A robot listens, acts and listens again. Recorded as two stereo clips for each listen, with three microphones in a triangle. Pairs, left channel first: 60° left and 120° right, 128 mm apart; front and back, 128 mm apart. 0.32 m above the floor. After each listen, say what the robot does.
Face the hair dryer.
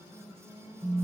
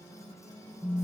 Keep listening.
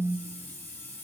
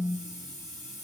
Keep listening.
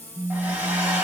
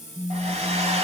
Turn 170° left.
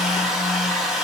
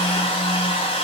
Turn 30° right.
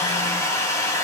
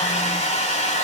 Facing the hair dryer, 1 to 2 m away.